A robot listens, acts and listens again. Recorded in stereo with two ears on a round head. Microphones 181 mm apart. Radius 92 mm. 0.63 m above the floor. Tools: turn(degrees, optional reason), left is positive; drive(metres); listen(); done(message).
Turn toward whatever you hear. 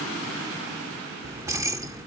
turn(degrees=-15, reason="The keys jangling: about 15° right or 165° right.")
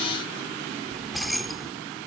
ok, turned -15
done("Facing the keys jangling.")